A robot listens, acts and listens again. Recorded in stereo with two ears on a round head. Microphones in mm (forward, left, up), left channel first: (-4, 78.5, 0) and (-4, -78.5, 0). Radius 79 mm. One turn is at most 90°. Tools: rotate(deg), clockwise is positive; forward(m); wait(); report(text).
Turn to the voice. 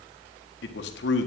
rotate(-70)
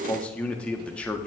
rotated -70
rotate(-10)
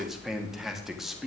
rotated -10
report("Facing the man speaking, 1 to 2 m away.")